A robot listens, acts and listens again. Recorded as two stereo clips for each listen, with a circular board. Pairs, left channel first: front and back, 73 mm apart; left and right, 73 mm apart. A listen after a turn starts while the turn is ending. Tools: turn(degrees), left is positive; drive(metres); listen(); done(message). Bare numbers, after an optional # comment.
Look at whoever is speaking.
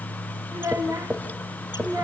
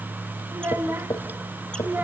# The child speaking: 150° right.
turn(-150)
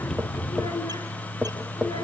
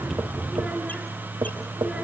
listen()
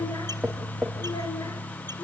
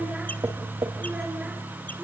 listen()
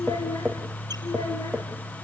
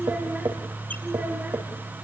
# The child speaking is now 20° right.
turn(-20)
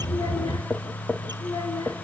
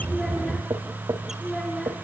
# The child speaking is now 10° left.
turn(10)
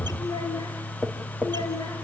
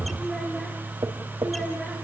done("Facing the child speaking, over 4 m away.")